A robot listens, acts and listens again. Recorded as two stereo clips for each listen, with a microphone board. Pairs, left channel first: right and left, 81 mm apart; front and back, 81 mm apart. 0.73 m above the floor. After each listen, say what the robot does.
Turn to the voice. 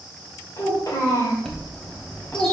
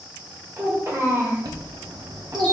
Turn 140° right.
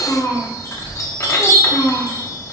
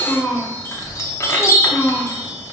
Turn 65° right.
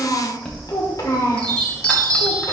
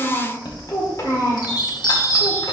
Turn 50° right.
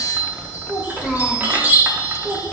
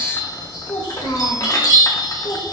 Facing the child speaking, 1 to 2 m away.